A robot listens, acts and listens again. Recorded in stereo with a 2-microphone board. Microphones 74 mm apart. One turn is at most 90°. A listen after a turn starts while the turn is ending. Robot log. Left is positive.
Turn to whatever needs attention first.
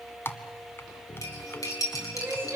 note: The crying: about 30° right or 150° right.
cmd yaw -30
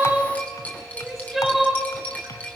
end: Found it: crying, straight ahead, 2 to 4 m away.